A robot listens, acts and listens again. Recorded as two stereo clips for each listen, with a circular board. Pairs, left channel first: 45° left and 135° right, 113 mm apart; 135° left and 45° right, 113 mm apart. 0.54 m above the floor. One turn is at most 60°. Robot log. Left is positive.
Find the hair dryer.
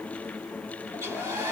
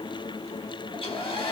note: The hair dryer: 160° left.
cmd yaw +60
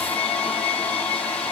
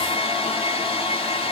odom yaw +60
note: The hair dryer is now 120° left.
cmd yaw +60
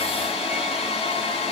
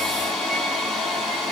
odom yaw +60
note: The hair dryer is now 50° left.
cmd yaw +50
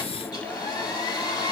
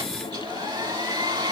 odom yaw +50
end: Facing the hair dryer, 1 to 2 m away.